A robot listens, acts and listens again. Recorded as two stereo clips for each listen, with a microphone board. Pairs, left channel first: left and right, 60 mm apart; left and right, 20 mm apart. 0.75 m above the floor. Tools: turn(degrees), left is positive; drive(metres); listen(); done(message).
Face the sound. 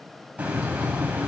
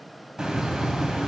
turn(degrees=-25)
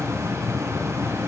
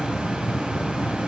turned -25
turn(degrees=-130)
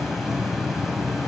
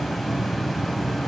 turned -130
done("Facing the hiss.")